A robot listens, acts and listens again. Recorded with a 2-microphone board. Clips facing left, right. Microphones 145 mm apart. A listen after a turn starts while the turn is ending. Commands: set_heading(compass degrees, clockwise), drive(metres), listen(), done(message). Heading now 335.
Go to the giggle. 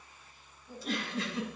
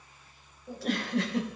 set_heading(50)
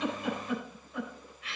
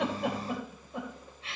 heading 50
set_heading(80)
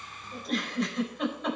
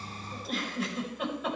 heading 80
drive(1.0)
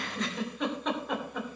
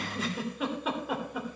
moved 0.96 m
drive(1.0)
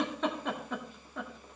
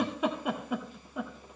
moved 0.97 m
set_heading(90)
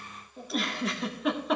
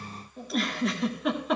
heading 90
drive(1.0)
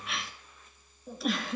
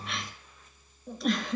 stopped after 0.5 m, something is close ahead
done("Arrived at the giggle, straight ahead.")